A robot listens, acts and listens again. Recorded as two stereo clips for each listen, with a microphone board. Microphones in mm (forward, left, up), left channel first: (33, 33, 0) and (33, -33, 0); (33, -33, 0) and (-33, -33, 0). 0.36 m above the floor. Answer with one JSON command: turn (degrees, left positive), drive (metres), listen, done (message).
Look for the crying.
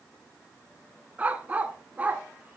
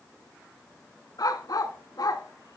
{"listen": true}
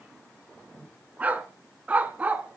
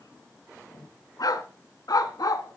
{"listen": true}
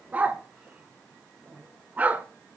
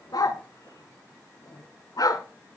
{"done": "I can't make out crying, only a dog barking."}